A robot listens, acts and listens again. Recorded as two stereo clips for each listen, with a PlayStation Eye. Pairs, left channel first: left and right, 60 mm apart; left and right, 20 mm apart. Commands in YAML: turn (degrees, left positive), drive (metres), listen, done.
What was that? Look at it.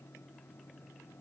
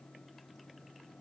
listen: true
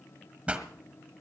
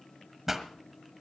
turn: -20
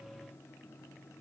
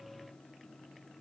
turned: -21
listen: true
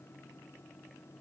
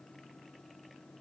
done: "I heard a pop, but can't make it out now. It was about straight ahead or 135° right."